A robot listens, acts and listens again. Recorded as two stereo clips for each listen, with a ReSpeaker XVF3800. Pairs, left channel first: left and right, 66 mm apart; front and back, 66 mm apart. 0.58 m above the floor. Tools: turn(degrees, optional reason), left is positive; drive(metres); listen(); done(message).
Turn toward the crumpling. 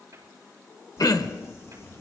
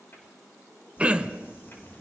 turn(degrees=50, reason="The crumpling: 50° left.")
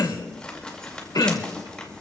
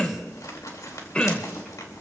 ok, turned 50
turn(degrees=15, reason="The crumpling is now 15° left.")
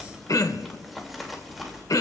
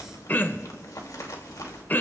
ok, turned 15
done("Facing the crumpling, 2 to 4 m away.")